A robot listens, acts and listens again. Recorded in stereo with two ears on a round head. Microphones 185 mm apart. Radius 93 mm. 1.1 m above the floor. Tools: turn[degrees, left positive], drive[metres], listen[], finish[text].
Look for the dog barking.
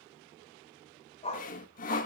Thought: The dog barking: about 30° left or 150° left.
Action: turn[30]
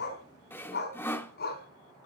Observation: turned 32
Thought: So it is at 130° left.
Action: turn[130]
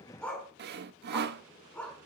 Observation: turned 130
Thought: The dog barking is now 10° left.
Action: turn[10]
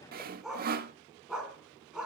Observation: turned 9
Action: finish[Facing the dog barking, over 4 m away.]